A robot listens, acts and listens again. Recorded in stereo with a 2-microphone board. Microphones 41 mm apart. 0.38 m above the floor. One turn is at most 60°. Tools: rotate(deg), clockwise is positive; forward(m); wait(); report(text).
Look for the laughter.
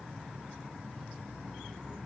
wait()
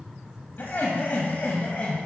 rotate(-40)
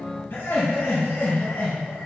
rotate(-60)
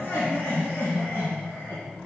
rotate(-60)
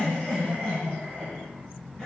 rotate(-15)
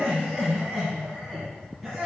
report("Found it: laughter, straight ahead.")